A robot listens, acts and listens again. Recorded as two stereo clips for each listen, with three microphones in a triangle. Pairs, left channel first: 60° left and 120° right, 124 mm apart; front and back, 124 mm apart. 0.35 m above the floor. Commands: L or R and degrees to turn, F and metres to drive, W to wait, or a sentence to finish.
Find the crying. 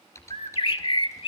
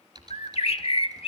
W
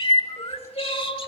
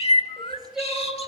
L90
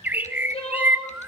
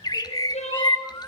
L20
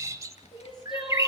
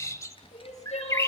L10
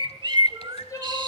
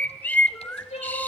Found it: crying, straight ahead, 2 to 4 m away.